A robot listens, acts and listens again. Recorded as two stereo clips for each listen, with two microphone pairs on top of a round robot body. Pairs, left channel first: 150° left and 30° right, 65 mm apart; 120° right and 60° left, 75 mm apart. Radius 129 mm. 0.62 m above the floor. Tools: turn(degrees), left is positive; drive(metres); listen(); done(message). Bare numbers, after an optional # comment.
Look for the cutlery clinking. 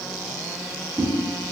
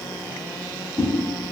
listen()
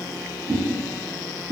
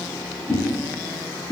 listen()
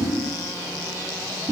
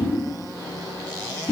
done("I can't make out cutlery clinking, only a whoosh.")